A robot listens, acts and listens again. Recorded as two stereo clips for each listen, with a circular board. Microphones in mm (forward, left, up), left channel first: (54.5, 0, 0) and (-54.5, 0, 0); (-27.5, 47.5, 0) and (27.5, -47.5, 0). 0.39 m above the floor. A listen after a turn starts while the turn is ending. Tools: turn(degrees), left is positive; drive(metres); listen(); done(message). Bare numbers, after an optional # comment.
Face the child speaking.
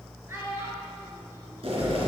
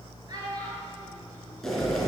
# The child speaking: 115° right.
turn(-115)
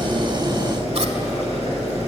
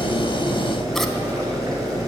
listen()
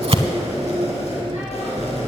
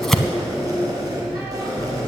listen()
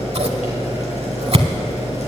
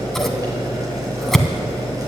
done("I heard a child speaking from this way, but can't make it out now.")